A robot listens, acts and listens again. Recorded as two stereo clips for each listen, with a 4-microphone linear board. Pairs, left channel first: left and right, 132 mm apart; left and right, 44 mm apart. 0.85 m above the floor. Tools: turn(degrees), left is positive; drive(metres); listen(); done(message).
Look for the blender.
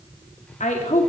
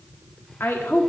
listen()
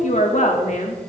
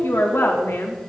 listen()
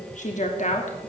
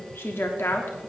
done("I can't make out a blender, only a woman speaking.")